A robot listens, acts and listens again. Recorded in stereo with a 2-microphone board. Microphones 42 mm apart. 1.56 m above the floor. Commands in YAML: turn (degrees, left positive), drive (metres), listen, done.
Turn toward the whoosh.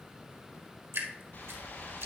turn: 55
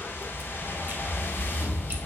turn: 70
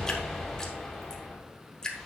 done: "Facing the whoosh, 2 to 4 m away."